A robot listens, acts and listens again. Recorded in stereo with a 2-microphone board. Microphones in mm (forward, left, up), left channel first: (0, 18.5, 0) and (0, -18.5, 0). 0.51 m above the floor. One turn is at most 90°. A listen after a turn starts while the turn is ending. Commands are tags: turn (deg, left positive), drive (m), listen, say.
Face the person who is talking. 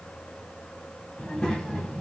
<turn deg="20"/>
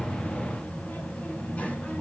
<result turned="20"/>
<turn deg="90"/>
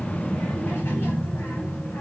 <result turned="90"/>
<turn deg="75"/>
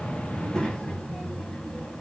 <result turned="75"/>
<turn deg="20"/>
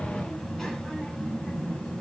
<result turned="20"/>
<turn deg="10"/>
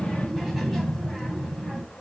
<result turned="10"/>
<say>Facing the child speaking.</say>